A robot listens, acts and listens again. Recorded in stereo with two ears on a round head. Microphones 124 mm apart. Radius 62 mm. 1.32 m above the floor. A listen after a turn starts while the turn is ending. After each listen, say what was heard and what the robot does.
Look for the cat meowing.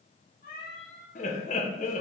The cat meowing: about 60° left or 120° left. Turn 60° left.
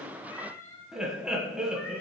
So it is at 25° left. Turn 25° left.
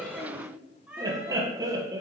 Facing the cat meowing, 1 to 2 m away.